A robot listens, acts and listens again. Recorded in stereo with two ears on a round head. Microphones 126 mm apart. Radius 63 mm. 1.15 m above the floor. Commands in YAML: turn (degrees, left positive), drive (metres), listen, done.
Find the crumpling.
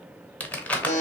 turn: 30
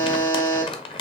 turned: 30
turn: 140
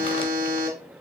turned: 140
listen: true
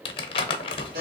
turn: 40
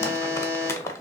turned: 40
turn: 20
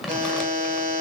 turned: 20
listen: true
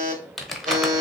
done: "Facing the crumpling, under 1 m away."